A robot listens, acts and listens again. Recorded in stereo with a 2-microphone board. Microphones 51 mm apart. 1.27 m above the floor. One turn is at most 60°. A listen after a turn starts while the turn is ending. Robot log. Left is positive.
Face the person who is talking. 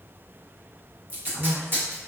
note: The woman speaking: about 75° right or 105° right.
cmd yaw -60
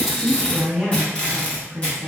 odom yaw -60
note: So it is at 15° right.
cmd yaw -15
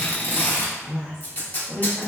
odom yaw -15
end: Found it: a woman speaking, straight ahead, under 1 m away.